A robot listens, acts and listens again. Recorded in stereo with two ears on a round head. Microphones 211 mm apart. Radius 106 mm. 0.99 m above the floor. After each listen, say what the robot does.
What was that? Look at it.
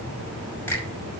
Turn 30° left.
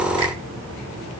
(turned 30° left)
Keep listening.
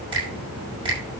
Turn 20° right.
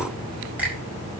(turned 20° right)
Found it: a finger snap, straight ahead.